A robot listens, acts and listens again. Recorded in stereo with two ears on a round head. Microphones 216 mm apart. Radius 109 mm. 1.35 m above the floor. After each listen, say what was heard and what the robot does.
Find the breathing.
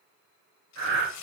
The breathing: about 55° right or 125° right. Turn 55° right.
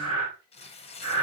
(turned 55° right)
So it is at 70° right. Turn 70° right.
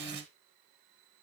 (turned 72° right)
Keep listening.
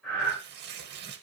Facing the breathing.